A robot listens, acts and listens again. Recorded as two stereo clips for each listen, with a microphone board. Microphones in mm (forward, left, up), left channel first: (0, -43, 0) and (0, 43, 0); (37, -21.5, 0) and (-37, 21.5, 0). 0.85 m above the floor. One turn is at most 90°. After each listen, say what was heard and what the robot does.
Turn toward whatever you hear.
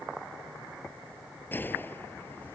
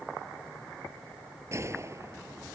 The gunshot: 155° right. Turn 90° right.
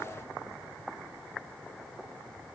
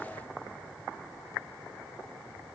Nothing new. It was at 65° right. Turn 65° right.
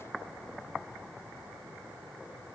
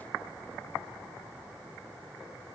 I heard a gunshot from this way, but can't make it out now.